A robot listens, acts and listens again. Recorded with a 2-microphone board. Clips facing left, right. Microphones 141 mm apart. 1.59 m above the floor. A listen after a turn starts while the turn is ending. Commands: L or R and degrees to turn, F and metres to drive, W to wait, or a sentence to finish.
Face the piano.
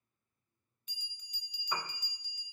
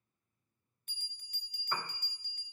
L30
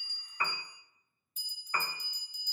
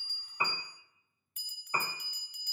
R25
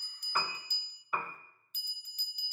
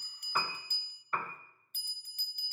Facing the piano, 1 to 2 m away.